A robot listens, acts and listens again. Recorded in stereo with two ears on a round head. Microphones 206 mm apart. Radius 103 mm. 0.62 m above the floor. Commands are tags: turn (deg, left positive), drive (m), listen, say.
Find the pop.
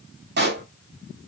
<turn deg="-45"/>
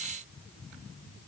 <listen/>
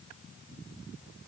<say>I heard a pop, but can't make it out now. It was about straight ahead or 90° right.</say>